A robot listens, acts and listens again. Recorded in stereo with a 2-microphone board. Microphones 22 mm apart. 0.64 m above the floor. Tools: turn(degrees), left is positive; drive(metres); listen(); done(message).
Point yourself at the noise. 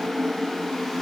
listen()
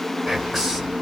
turn(degrees=-20)
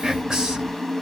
turn(degrees=-140)
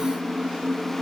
listen()
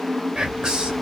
turn(degrees=-35)
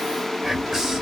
done("Found it: whispering, straight ahead.")